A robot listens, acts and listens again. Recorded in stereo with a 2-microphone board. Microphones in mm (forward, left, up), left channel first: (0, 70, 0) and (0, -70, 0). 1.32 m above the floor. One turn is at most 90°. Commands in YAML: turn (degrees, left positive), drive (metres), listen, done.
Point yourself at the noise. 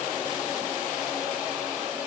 listen: true
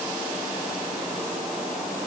listen: true
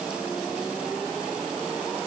done: "I can't make out anything to turn to."